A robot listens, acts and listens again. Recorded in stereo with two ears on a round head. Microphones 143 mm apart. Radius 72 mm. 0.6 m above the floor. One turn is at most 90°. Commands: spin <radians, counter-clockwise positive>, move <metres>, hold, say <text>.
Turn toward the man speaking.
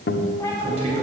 spin -0.79
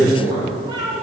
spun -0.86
spin -1.31
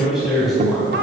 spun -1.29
say Facing the man speaking, 2 to 4 m away.